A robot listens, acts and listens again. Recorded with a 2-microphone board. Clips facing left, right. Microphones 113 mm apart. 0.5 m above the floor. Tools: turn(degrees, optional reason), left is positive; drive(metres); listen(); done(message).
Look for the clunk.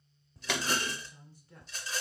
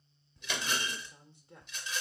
turn(degrees=75, reason="The clunk: about 75° left or 105° left.")
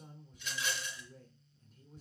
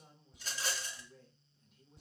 listen()
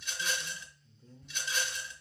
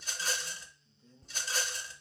done("I heard a clunk, but can't make it out now. It was about straight ahead or 30° left.")